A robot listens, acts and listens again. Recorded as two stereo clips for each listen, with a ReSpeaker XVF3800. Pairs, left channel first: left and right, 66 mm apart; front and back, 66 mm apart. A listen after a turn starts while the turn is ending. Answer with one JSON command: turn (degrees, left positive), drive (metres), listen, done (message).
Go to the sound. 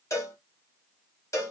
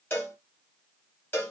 {"turn": 50}
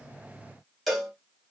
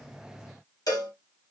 {"drive": 1.0}
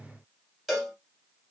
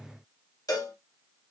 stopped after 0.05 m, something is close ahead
{"done": "Something is in my way. I am facing the cowbell but have not reached it."}